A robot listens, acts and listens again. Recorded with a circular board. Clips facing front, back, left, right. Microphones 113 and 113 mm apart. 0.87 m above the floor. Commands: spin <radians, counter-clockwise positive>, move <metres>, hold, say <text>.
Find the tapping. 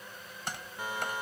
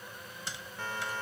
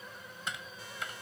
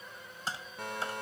spin -0.61
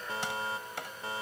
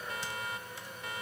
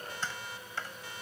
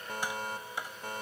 spin -0.26
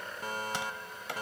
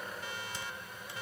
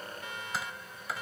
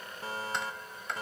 say Found it: tapping, straight ahead.